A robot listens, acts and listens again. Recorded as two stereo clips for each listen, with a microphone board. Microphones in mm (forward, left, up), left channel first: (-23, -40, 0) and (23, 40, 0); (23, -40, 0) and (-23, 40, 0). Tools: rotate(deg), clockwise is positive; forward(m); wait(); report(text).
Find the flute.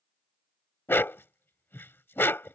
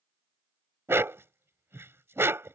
wait()
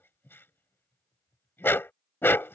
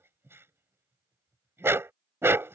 wait()
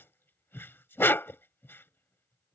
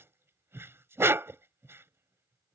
report("I can't make out a flute to turn to.")